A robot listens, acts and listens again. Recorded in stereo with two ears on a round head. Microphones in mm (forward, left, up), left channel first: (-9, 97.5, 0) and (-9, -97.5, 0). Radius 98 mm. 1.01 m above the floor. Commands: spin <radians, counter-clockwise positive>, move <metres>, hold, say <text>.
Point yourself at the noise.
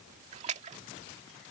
spin -0.52
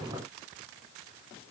hold
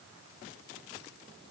say I heard a splash, but can't make it out now. It was about straight ahead or 120° right.